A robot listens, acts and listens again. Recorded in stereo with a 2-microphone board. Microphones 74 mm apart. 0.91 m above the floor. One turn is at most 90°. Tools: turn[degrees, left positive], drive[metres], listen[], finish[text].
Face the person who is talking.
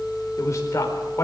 Thought: The man speaking: about 35° left or 145° left.
Action: turn[35]
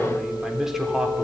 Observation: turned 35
Action: finish[Facing the man speaking, 2 to 4 m away.]